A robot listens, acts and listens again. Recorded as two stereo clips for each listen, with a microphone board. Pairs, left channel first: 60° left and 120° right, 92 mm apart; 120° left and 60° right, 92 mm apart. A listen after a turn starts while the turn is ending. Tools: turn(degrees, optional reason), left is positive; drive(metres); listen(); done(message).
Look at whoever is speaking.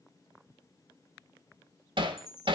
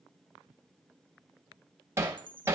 listen()
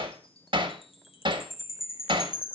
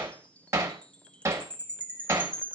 listen()
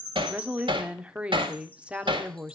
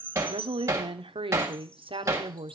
turn(degrees=-40, reason="The woman speaking: 40° right.")
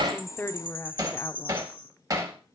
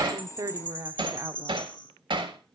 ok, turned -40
done("Facing the woman speaking, under 1 m away.")